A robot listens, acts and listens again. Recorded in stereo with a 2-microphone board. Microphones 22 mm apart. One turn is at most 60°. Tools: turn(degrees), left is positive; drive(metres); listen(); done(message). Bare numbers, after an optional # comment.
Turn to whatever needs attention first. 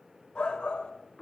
# The shout: about 55° left or 125° left.
turn(55)
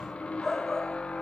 # So it is at 35° left.
turn(35)
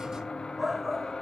# The shout is now 15° right.
turn(-15)
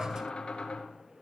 listen()
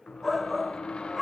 done("Facing the shout.")